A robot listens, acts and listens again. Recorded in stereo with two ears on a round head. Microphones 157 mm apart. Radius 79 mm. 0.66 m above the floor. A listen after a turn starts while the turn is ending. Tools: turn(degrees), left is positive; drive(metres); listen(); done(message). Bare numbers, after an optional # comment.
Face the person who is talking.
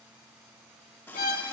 listen()
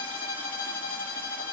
listen()
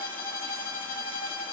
done("I can't make out anyone speaking, only a running tap and a violin.")